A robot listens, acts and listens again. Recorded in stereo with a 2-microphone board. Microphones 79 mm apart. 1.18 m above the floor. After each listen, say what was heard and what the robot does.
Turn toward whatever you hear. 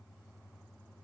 Keep listening.
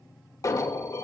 The alarm: about 45° left or 135° left. Turn 45° left.
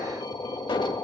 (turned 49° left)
So it is at 90° left. Turn 90° left.
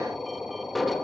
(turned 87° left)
Facing the alarm, 1 to 2 m away.